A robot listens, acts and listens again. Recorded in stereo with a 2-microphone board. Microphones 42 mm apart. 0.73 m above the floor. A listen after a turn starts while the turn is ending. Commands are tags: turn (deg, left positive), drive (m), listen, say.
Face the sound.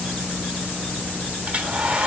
<turn deg="-30"/>
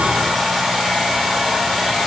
<say>Found it: a hair dryer, straight ahead, 1 to 2 m away.</say>